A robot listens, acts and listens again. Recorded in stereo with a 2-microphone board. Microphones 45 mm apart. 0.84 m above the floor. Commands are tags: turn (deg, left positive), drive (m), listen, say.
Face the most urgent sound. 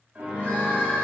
<turn deg="40"/>
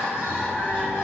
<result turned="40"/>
<turn deg="105"/>
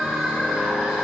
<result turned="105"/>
<say>Facing the crying.</say>